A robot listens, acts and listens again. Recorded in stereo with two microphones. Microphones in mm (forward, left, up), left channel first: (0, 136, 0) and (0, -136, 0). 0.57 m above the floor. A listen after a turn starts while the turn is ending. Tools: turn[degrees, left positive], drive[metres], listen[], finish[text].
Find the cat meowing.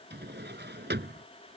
Action: listen[]
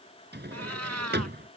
Thought: The cat meowing: about 70° right or 110° right.
Action: turn[-70]
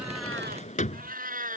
Thought: So it is at 30° right.
Action: turn[-30]
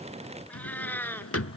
Action: finish[Found it: a cat meowing, straight ahead.]